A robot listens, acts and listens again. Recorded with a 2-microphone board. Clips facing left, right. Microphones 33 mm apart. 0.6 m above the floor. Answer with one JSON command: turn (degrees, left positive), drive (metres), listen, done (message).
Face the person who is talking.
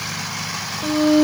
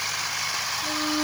{"listen": true}
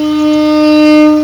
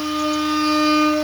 {"listen": true}
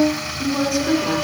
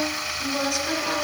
{"turn": 30}
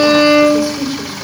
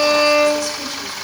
{"turn": 160}
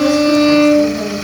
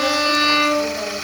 {"turn": -10}
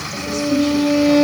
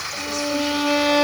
{"listen": true}
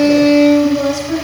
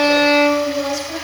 {"done": "Facing the woman speaking, 2 to 4 m away."}